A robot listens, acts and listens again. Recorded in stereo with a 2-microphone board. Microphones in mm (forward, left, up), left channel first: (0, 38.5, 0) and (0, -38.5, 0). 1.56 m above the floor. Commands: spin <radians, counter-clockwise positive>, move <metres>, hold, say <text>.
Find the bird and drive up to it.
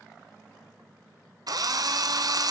hold
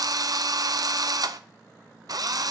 hold
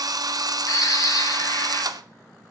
spin 0.96
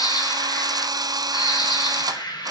spin 1.22
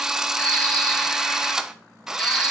spin 0.26
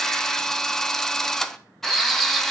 move 1.0
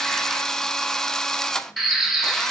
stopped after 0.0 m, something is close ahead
say Something is in my way. I am facing the bird but have not reached it.